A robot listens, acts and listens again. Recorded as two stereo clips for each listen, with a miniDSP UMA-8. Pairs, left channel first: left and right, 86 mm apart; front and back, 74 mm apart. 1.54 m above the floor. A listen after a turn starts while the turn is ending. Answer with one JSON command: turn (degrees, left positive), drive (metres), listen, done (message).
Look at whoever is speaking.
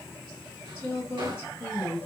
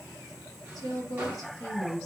{"turn": 20}
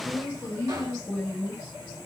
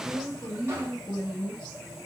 {"turn": 10}
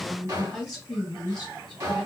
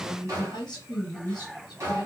{"done": "Found it: a woman speaking, straight ahead, 1 to 2 m away."}